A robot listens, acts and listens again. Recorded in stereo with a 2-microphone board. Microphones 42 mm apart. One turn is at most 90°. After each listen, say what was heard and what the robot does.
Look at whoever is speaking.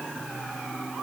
Keep listening.
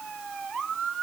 Keep listening.
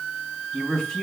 Turn 30° left.
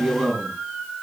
So it is at 15° right. Turn 15° right.
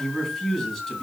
Facing the man speaking, 2 to 4 m away.